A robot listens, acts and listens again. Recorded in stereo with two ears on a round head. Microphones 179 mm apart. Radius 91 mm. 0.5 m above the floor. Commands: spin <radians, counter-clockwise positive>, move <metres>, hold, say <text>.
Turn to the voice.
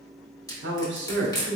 spin -0.96
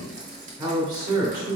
spin -0.44
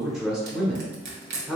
say Facing the man speaking, 1 to 2 m away.